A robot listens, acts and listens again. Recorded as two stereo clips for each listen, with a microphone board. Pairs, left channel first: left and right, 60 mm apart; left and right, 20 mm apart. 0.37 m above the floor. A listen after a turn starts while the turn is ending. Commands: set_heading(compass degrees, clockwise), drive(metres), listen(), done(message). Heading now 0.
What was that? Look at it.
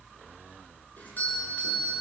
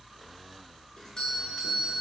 set_heading(330)
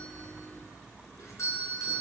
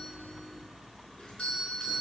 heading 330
set_heading(210)
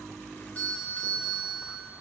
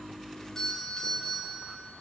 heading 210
set_heading(185)
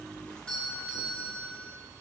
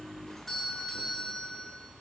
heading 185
set_heading(170)
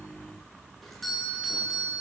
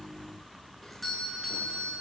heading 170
done("Facing the doorbell.")